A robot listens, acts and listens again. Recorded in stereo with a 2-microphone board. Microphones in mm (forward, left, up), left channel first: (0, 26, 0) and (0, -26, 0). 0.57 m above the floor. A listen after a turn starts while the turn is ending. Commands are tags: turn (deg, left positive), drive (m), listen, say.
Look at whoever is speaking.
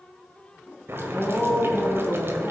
<turn deg="30"/>
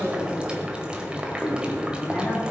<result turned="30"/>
<turn deg="150"/>
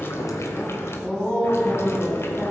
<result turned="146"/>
<say>Facing the woman speaking, over 4 m away.</say>